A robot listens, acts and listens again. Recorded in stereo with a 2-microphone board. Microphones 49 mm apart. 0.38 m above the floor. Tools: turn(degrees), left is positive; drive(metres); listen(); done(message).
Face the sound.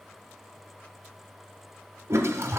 turn(degrees=-70)
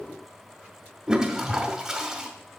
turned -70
turn(degrees=-15)
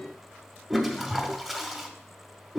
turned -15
done("Facing the toilet flushing, under 1 m away.")